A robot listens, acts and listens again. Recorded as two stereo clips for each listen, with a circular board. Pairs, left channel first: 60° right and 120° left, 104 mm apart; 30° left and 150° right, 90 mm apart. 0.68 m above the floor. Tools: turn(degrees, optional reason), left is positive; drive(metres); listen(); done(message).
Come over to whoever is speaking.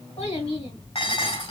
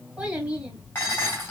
turn(degrees=-70, reason="The child speaking: 70° right.")
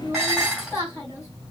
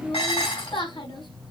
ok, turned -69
drive(metres=1.0)
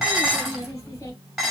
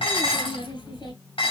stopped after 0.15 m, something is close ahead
done("Something is in my way. I am facing the child speaking but have not reached it.")